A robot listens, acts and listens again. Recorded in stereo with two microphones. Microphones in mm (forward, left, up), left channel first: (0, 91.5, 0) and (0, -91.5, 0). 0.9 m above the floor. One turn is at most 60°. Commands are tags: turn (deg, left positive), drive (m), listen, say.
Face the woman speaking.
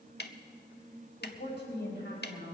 <turn deg="60"/>
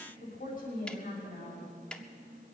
<turn deg="50"/>
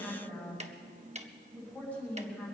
<say>Facing the woman speaking, over 4 m away.</say>